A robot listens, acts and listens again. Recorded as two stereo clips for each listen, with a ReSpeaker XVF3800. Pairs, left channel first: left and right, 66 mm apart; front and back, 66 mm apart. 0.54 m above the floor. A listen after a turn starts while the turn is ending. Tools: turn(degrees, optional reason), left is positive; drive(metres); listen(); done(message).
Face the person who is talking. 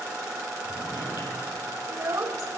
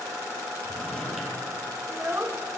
turn(degrees=-130, reason="The child speaking: 130° right.")
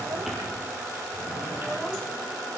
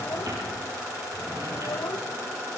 listen()
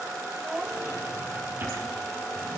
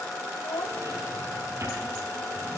done("Facing the child speaking.")